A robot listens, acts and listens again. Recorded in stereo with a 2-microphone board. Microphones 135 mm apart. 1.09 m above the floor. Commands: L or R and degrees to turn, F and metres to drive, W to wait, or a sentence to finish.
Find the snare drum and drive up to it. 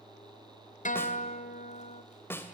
L15
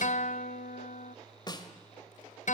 L150
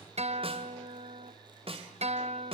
R45
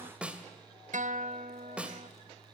R10
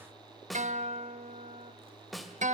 F1.0
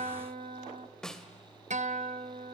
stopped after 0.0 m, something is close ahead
Blocked. The snare drum is further on, straight ahead.